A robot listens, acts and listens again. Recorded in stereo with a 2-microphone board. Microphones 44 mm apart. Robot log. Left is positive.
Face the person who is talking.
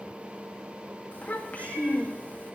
note: The child speaking: about 35° left or 145° left.
cmd yaw +35
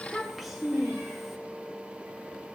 end: Found it: a child speaking, straight ahead.